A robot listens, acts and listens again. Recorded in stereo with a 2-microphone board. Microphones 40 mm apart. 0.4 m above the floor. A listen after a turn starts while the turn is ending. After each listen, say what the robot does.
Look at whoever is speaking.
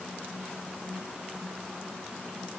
Keep listening.
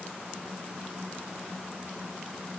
Keep listening.
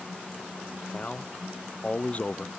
Turn 35° left.
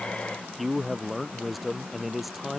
Facing the man speaking.